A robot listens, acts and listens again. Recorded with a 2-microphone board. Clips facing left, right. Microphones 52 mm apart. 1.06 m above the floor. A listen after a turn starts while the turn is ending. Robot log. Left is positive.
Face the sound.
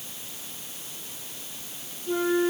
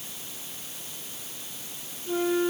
cmd yaw -30
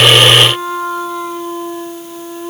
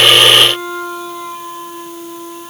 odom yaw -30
note: So it is at 20° left.
cmd yaw +20
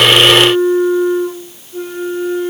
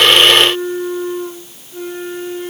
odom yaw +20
end: Found it: a flute, straight ahead, over 4 m away.